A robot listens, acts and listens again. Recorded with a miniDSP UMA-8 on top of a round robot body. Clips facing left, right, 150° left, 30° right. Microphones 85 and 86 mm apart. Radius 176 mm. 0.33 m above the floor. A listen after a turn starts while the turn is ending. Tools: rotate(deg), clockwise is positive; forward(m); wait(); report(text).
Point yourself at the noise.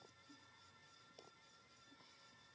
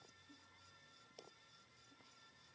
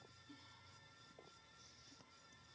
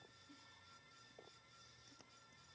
wait()
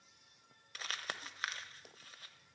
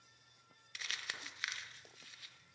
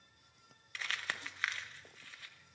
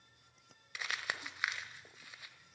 rotate(-45)
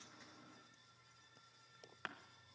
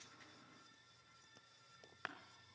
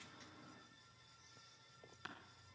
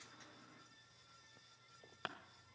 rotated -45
report("Facing the crumpling, 1 to 2 m away.")